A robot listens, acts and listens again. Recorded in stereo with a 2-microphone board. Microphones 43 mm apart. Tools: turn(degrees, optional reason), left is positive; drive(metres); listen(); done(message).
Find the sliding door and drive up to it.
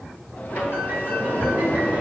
turn(degrees=35, reason="The sliding door: about 35° left or 145° left.")
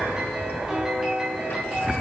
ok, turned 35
listen()
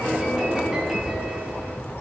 turn(degrees=110, reason="So it is at 110° left.")
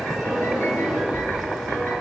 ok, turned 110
drive(metres=1.0)
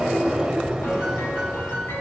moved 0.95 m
turn(degrees=-15, reason="The sliding door is now 15° right.")
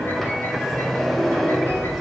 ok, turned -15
drive(metres=1.0)
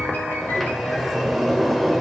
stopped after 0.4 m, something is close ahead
done("I am next to the sliding door.")